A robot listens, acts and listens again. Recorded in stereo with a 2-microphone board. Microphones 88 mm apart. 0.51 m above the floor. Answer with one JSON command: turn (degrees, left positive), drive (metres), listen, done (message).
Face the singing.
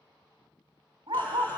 {"turn": 25}
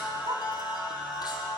{"turn": 125}
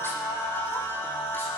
{"turn": 25}
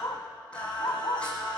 {"turn": 10}
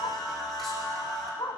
{"done": "Found it: singing, straight ahead, 2 to 4 m away."}